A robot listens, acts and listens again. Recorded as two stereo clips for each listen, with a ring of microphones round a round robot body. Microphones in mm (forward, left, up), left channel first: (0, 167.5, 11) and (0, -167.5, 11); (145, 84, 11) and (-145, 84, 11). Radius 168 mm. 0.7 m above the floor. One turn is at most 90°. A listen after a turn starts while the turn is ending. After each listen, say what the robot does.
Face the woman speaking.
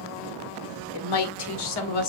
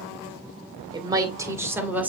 Turn 90° left.
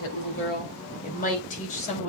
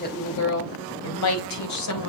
Turn 20° left.
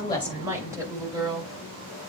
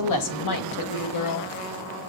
Turn 10° right.
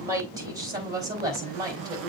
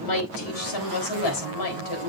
Turn 10° right.
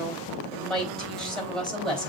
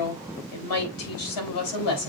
Facing the woman speaking.